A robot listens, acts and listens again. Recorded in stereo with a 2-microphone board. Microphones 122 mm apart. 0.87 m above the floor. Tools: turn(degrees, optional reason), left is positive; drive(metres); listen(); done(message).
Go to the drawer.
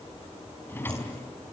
turn(degrees=20, reason="The drawer: about 20° left or 160° left.")
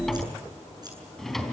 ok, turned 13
drive(metres=1.0)
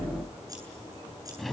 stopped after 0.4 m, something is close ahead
done("Something is in my way. I am facing the drawer but have not reached it.")